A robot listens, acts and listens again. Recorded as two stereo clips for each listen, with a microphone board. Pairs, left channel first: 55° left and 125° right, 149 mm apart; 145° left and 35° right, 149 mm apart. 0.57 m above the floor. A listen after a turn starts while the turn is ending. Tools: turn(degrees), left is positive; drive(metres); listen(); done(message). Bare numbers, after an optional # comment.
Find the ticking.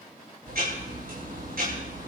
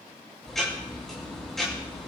# The ticking: 125° right.
turn(-125)
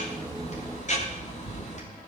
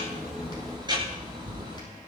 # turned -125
# The ticking is now 25° left.
turn(25)
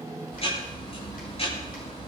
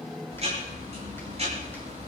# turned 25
# The ticking is now 10° left.
turn(10)
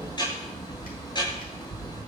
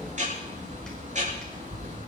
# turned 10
done("Found it: ticking, straight ahead.")